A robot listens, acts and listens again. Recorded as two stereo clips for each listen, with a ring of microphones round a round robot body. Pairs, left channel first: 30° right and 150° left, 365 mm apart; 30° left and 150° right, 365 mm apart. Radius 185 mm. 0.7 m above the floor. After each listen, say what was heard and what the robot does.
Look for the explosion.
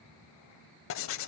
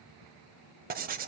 Keep listening.
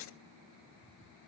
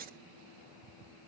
Keep listening.
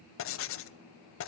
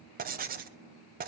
I can't make out an explosion to turn to.